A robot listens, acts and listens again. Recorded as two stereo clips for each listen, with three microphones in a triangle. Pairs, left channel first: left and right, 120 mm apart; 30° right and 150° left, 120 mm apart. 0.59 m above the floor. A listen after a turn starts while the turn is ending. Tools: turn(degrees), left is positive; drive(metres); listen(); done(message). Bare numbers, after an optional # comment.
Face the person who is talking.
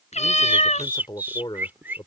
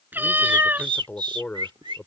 # The man speaking: 45° left.
turn(45)
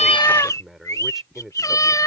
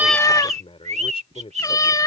done("Found it: a man speaking, straight ahead.")